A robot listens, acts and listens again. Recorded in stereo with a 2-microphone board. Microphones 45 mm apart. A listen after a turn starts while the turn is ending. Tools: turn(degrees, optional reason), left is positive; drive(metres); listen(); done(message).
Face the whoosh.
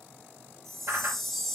turn(degrees=-90)
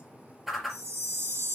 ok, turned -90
done("Facing the whoosh, 2 to 4 m away.")